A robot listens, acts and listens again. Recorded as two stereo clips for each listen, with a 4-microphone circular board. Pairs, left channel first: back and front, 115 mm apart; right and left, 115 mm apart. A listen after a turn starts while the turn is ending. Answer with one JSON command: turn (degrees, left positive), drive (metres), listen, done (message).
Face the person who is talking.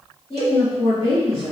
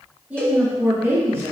{"turn": 150}
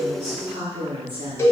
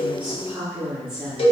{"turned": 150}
{"done": "Facing the woman speaking, 1 to 2 m away."}